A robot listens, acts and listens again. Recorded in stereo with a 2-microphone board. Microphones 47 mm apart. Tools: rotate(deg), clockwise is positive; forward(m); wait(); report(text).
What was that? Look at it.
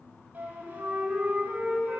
rotate(40)
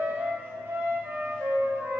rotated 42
rotate(95)
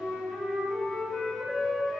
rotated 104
rotate(-10)
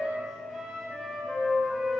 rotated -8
report("Facing the flute, 2 to 4 m away.")